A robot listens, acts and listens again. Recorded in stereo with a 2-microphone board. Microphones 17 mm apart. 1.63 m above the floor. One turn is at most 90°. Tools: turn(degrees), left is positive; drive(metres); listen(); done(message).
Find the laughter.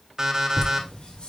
turn(degrees=90)
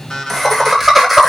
done("Facing the laughter.")